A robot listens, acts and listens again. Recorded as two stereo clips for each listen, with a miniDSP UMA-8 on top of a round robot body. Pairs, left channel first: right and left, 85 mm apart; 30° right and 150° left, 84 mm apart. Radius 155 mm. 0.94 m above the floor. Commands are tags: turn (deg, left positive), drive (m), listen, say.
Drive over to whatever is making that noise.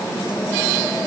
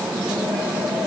<listen/>
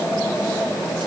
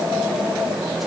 <listen/>
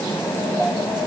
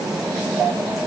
<say>I can't make out anything to turn to.</say>